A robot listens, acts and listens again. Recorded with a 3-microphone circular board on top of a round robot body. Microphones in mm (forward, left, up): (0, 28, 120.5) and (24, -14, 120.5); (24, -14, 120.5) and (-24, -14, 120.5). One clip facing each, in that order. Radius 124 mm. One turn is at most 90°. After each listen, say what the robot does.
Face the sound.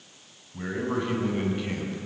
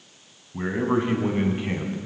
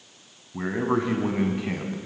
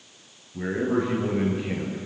Found it: a man speaking, straight ahead.